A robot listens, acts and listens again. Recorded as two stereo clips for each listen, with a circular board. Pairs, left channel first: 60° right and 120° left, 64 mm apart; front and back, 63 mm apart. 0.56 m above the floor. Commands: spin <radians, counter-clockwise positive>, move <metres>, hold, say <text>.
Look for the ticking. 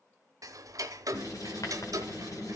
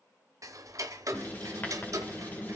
spin 2.62
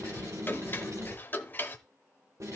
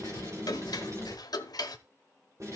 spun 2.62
say Found it: ticking, straight ahead.